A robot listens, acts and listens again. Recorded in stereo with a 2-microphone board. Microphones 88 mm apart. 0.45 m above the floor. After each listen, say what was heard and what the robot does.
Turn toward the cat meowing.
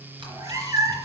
The cat meowing: about 45° right or 135° right. Turn 45° right.
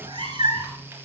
So it is at 60° right. Turn 60° right.
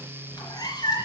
The cat meowing is now 55° left. Turn 55° left.
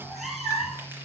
Found it: a cat meowing, straight ahead.